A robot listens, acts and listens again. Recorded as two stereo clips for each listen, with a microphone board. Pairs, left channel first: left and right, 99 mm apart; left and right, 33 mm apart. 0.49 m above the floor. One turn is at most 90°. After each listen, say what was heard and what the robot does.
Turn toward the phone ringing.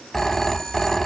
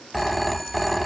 Turn 30° left.
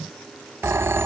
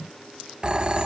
So it is at 25° right. Turn 25° right.
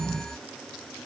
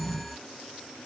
Facing the phone ringing.